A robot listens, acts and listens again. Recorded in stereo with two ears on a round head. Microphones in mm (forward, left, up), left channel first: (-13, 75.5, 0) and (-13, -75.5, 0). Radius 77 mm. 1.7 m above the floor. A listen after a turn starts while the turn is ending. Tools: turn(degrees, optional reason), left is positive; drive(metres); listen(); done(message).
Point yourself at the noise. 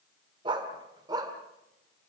turn(degrees=-25, reason="The dog barking: about 25° right or 155° right.")
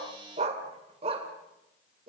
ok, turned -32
turn(degrees=-35, reason="The dog barking: about 35° right or 145° right.")
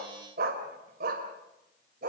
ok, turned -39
turn(degrees=-120, reason="So it is at 120° right.")
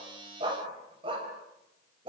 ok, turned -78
turn(degrees=-30, reason="The dog barking is now 30° right.")
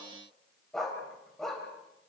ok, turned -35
done("Found it: a dog barking, straight ahead, 2 to 4 m away.")